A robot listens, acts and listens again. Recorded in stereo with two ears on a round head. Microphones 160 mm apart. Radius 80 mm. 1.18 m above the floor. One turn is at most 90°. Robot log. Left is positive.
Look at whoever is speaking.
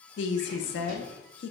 note: The woman speaking: about 70° left or 110° left.
cmd yaw +70
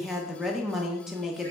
end: Facing the woman speaking.